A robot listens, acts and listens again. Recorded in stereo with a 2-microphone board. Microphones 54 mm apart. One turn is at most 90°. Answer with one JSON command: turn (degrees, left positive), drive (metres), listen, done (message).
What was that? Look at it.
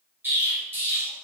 {"turn": -40}
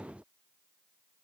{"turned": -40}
{"listen": true}
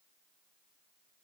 {"done": "I heard an explosion, but can't make it out now. It was about straight ahead or 100° right."}